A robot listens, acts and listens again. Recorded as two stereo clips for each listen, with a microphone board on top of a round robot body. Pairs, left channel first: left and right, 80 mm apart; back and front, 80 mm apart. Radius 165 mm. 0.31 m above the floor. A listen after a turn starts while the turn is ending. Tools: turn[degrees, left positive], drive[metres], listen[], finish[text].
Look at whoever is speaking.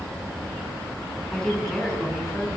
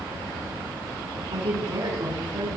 Action: finish[Found it: a woman speaking, straight ahead.]